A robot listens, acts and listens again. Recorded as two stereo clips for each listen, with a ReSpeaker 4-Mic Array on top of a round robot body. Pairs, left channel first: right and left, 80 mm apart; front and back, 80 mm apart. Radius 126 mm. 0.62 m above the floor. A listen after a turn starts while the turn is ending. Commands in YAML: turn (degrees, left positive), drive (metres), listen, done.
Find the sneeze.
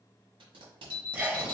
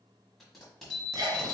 turn: 155
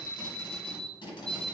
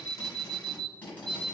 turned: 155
done: "Facing where the sneeze came from. I can't hear it now."